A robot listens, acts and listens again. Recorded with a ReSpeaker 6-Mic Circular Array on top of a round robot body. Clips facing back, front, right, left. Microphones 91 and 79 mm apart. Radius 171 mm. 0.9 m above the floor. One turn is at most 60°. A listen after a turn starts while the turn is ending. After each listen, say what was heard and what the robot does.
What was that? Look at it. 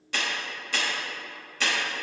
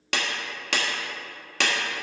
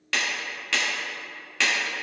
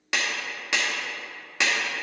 The clap: 15° left. Turn 15° left.
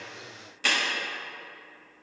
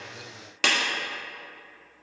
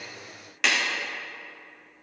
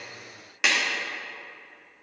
Found it: a clap, straight ahead.